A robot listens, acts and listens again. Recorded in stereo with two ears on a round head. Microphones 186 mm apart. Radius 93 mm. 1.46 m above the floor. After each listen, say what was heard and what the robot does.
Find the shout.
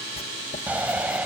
Turn 30° right.
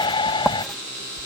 So it is at 20° left. Turn 20° left.
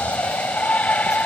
Facing the shout.